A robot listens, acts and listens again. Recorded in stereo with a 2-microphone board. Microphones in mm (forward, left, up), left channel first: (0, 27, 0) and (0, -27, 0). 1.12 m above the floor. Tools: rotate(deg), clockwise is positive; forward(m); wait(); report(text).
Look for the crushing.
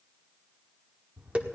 wait()
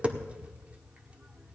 wait()
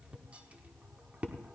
report("I can't make out crushing, only tapping.")